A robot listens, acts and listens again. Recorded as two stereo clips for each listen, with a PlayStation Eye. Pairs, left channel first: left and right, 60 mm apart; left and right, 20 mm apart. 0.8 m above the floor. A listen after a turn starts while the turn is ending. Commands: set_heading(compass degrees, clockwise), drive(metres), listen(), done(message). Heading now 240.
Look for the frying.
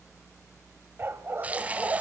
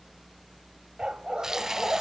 set_heading(265)
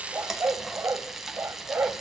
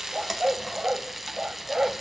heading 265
done("Facing the frying.")